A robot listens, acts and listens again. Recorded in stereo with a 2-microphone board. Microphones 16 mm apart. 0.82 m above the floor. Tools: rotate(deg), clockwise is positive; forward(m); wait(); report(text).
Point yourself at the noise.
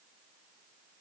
wait()
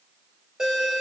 rotate(50)
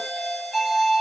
report("Facing the doorbell, 2 to 4 m away.")